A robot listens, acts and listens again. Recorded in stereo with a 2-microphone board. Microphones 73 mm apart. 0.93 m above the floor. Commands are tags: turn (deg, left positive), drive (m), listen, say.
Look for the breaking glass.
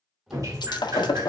<turn deg="75"/>
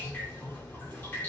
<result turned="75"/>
<listen/>
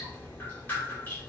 <say>I heard breaking glass, but can't make it out now. It was about straight ahead or 30° left.</say>